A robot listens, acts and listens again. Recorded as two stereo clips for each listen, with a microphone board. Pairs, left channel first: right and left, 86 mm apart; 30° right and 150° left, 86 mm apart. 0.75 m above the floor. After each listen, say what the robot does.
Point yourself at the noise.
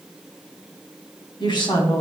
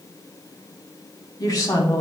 Turn 80° right.
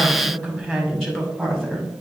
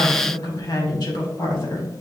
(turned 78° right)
Found it: a woman speaking, straight ahead, 2 to 4 m away.